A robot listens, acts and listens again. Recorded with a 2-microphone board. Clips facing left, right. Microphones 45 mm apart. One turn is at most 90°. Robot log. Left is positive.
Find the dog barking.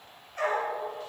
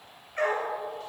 note: The dog barking: about 50° right or 130° right.
cmd yaw -50
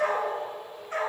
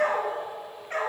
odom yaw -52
note: So it is at 55° right.
cmd yaw -55
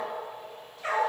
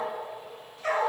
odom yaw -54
note: The dog barking is now 15° left.
cmd yaw +15
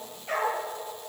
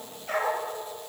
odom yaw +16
end: Facing the dog barking, 2 to 4 m away.